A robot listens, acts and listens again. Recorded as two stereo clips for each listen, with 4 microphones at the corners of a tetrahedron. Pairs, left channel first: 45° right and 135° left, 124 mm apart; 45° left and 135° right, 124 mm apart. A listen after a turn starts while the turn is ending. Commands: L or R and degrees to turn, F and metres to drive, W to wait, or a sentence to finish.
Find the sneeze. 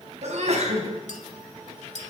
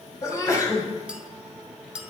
L110
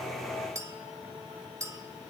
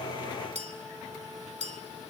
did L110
I heard a sneeze from this way, but can't make it out now.